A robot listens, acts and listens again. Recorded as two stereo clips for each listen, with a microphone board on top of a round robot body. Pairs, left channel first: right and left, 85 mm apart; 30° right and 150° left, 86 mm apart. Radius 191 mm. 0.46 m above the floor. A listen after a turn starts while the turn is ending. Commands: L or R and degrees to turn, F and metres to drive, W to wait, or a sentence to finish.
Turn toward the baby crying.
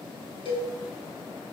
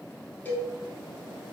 W
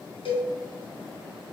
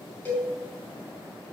W
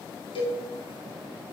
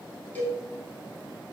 I can't make out a baby crying, only a cowbell.